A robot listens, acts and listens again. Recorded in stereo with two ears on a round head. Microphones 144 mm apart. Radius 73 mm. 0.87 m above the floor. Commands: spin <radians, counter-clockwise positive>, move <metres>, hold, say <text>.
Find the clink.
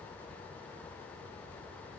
hold
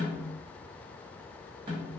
hold
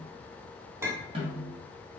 spin -0.26
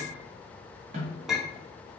say Found it: a clink, straight ahead, under 1 m away.